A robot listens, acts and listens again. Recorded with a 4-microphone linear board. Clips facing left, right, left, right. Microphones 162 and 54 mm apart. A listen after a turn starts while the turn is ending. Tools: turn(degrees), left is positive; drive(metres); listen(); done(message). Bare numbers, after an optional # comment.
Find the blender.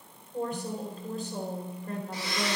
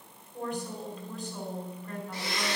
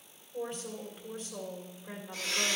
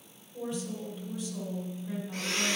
# The blender: about 55° right or 125° right.
turn(-55)
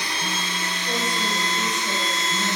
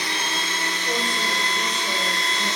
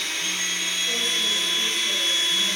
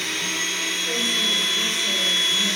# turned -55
# So it is at 70° right.
turn(-70)
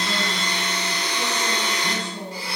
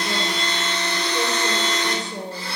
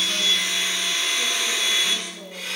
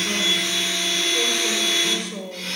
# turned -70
# The blender is now 15° left.
turn(15)
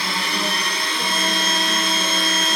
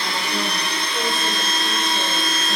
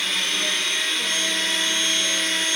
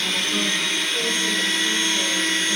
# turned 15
done("Facing the blender, 2 to 4 m away.")